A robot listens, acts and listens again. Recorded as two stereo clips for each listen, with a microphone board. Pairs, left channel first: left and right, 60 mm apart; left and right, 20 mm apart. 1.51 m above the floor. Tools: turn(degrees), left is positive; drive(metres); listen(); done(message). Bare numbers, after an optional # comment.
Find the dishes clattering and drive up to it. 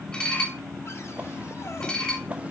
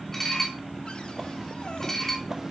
# The dishes clattering: about 15° left or 165° left.
turn(15)
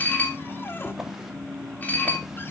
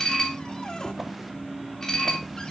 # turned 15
# So it is at 150° left.
turn(150)
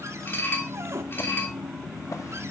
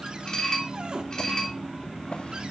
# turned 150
# The dishes clattering is now 40° left.
turn(40)
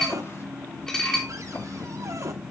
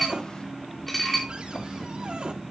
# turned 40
# The dishes clattering is now 10° left.
turn(10)
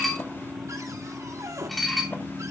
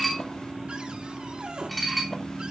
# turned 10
drive(1.0)
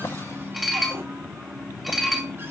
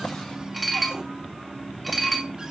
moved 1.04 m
drive(1.0)
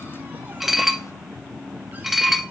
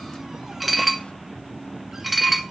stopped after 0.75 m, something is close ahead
done("Arrived at the dishes clattering, straight ahead.")